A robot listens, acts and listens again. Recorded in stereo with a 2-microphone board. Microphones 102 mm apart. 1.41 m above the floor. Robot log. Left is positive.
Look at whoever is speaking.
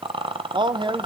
note: The man speaking: about 55° right or 125° right.
cmd yaw -55
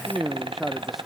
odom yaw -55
end: Facing the man speaking.